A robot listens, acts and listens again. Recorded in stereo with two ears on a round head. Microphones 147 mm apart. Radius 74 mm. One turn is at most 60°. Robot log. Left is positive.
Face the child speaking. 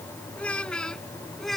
cmd yaw +30
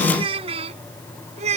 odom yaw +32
note: So it is at 45° right.
cmd yaw -45
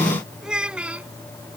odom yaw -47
note: The child speaking is now 10° right.
cmd yaw -10
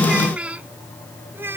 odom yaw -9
note: The child speaking is now 15° right.
cmd yaw -15
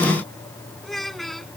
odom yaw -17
end: Found it: a child speaking, straight ahead.